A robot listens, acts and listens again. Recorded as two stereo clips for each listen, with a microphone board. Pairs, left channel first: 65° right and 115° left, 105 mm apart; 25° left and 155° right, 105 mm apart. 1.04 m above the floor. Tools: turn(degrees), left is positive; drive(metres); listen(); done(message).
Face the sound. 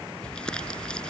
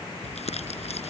turn(degrees=15)
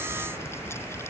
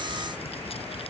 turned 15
listen()
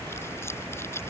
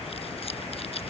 done("Found it: crumpling, straight ahead.")